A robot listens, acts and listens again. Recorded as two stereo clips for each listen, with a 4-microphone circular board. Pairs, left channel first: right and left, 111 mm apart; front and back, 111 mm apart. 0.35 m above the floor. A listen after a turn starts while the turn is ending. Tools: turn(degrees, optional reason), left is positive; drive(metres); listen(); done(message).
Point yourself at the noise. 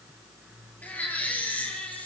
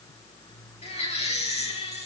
turn(degrees=-15, reason="The baby crying: 15° right.")
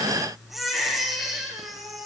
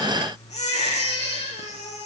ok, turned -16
done("Facing the baby crying.")